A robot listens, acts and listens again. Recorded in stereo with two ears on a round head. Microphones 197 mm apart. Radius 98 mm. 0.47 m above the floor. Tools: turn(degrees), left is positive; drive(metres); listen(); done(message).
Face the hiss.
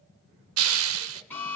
turn(degrees=-70)
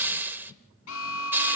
turn(degrees=-10)
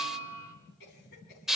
done("Found it: a hiss, straight ahead.")